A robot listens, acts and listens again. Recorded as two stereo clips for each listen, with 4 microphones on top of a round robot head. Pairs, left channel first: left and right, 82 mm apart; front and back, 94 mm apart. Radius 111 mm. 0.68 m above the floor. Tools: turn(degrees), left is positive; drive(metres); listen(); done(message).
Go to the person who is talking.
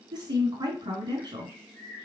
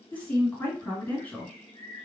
turn(degrees=-65)
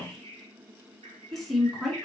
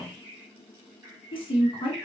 drive(metres=1.0)
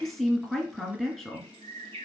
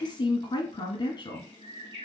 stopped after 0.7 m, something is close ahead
done("Arrived at the woman speaking, straight ahead.")